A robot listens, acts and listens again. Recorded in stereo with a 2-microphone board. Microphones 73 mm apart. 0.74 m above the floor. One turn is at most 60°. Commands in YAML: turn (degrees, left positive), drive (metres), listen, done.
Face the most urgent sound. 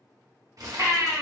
turn: -55
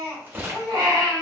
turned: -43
turn: -60
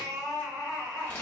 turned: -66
turn: -10
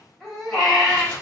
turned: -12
done: "Facing the baby crying, 1 to 2 m away."